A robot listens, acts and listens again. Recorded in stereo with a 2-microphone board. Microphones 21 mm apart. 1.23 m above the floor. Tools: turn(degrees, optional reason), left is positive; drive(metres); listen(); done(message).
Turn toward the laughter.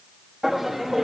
turn(degrees=-20, reason="The laughter: about 20° right or 160° right.")
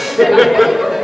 turn(degrees=-20, reason="The laughter: about 20° right or 160° right.")
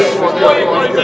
turn(degrees=-25, reason="The laughter: about 25° right or 155° right.")
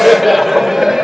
turn(degrees=-25, reason="The laughter: about 25° right or 155° right.")
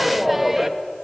turn(degrees=-20, reason="The laughter: about 20° right or 160° right.")
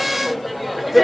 turn(degrees=-30)
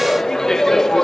turn(degrees=20, reason="So it is at 20° left.")
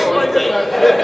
done("Found it: laughter, straight ahead.")